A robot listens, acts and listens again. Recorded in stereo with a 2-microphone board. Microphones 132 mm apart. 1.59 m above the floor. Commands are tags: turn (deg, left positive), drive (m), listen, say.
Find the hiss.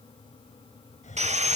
<turn deg="65"/>
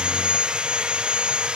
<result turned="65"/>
<listen/>
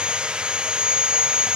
<listen/>
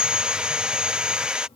<say>I heard a hiss, but can't make it out now. It was about straight ahead or 50° left.</say>